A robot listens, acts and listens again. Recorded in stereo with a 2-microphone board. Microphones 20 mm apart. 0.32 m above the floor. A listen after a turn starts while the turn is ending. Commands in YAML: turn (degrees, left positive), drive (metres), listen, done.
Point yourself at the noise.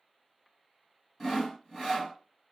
turn: 30
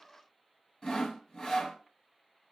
turn: 150
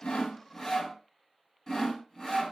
turn: 30
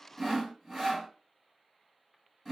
done: "Found it: sawing, straight ahead, 2 to 4 m away."